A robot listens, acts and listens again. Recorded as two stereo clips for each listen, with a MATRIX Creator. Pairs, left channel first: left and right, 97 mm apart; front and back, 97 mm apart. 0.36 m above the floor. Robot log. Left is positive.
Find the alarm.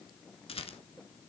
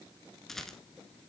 cmd idle
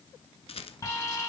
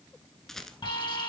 note: The alarm: 35° left.
cmd yaw +35
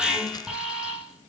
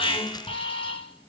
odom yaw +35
end: Found it: an alarm, straight ahead, over 4 m away.